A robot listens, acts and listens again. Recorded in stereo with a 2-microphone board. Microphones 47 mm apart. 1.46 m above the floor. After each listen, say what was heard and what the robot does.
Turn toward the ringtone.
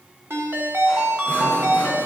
The ringtone: about 60° right or 120° right. Turn 60° right.
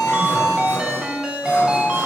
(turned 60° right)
So it is at 15° right. Turn 15° right.
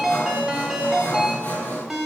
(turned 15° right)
Found it: a ringtone, straight ahead.